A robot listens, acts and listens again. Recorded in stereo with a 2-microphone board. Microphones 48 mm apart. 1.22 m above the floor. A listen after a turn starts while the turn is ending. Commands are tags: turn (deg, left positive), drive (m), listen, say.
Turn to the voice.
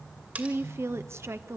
<turn deg="-65"/>
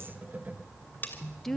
<say>Facing the woman speaking, 1 to 2 m away.</say>